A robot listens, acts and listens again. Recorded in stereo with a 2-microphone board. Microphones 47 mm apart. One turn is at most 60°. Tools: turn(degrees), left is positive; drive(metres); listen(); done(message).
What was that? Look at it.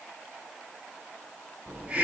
turn(degrees=-25)
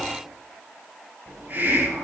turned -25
turn(degrees=-60)
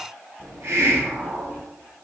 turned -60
turn(degrees=-60)
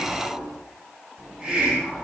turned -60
turn(degrees=-20)
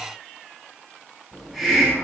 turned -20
done("Facing the hiss, over 4 m away.")